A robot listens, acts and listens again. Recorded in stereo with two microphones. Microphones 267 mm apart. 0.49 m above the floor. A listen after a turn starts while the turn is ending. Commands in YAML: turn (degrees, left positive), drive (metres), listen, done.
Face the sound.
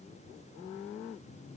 listen: true
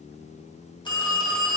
turn: 15
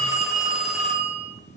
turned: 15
done: "Facing the phone ringing, under 1 m away."